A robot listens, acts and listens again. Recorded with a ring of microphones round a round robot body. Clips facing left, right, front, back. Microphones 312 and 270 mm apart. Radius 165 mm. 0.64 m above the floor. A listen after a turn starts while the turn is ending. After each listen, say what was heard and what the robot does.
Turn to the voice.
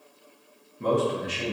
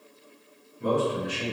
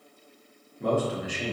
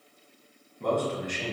The man speaking: 85° left. Turn 85° left.
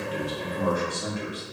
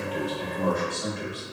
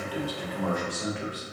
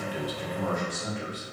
The man speaking is now 10° left. Turn 10° left.
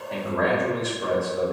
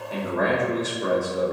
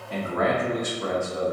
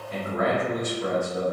Found it: a man speaking, straight ahead.